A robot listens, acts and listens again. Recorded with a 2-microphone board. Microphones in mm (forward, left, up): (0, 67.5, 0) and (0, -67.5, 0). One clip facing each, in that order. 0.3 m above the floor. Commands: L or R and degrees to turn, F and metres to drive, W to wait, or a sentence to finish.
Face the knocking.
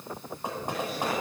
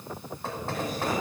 L15
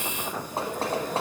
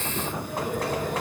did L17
L150
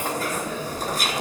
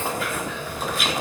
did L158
R10
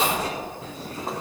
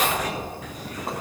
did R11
W
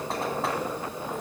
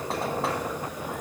I heard knocking from this way, but can't make it out now.